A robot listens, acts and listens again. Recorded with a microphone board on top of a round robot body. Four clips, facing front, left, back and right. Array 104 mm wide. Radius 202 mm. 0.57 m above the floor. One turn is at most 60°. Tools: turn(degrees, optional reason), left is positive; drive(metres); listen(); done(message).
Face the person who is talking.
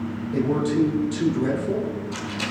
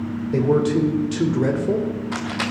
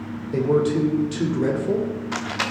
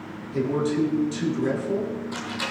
turn(degrees=60, reason="The man speaking: 115° left.")
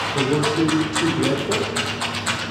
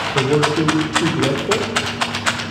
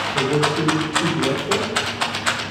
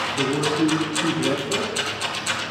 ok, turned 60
turn(degrees=60, reason="The man speaking is now 80° left.")
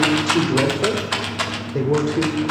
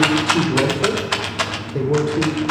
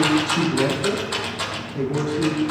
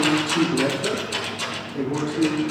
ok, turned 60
turn(degrees=35, reason="The man speaking is now 35° left.")
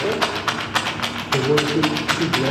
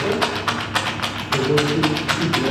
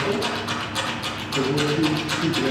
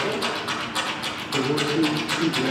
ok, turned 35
turn(degrees=10, reason="The man speaking is now 10° left.")
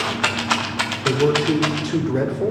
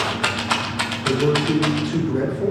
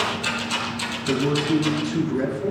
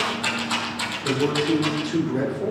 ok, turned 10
done("Found it: a man speaking, straight ahead.")